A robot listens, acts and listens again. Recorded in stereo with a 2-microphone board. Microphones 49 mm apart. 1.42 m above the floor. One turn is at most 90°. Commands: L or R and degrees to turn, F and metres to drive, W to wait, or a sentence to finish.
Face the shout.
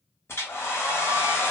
W
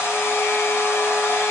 W
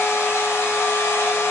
I can't make out a shout to turn to.